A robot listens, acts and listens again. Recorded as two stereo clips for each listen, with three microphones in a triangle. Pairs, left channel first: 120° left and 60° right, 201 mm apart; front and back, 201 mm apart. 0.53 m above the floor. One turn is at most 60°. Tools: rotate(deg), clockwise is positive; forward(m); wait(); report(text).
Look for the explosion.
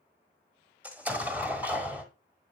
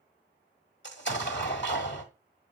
rotate(-20)
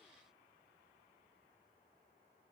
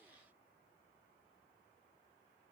report("Facing where the explosion came from. I can't hear it now.")